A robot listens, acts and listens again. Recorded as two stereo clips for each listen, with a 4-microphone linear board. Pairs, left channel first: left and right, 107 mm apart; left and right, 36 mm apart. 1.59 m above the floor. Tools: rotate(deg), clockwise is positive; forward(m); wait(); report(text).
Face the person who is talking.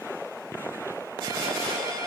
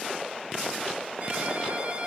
wait()
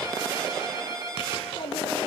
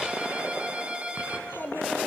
rotate(-70)
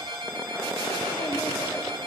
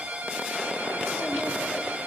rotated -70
wait()
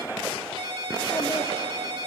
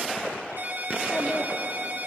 wait()
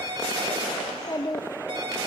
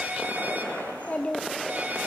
rotate(-40)
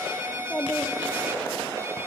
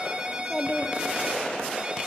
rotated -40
rotate(-10)
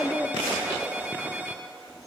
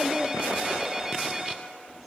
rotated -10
report("Facing the child speaking.")